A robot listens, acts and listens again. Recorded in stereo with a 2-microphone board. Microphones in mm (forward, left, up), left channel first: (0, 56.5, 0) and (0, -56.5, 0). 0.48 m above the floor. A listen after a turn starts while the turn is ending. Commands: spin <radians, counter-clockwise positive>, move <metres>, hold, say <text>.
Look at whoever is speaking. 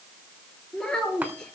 spin 0.52
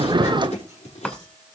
hold
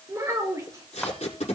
spin -0.52
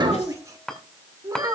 spin -0.61
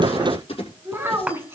spin -0.35
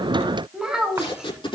say Found it: a child speaking, straight ahead.